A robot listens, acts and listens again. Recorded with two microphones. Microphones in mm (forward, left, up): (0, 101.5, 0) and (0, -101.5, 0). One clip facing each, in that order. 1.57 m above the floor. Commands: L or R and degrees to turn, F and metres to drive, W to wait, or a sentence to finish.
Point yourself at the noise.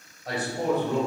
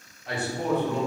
L35
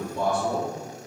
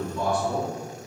L125
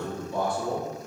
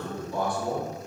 L30
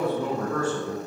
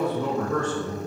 L10
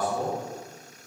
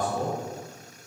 L10
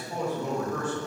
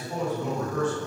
Found it: a man speaking, straight ahead, 1 to 2 m away.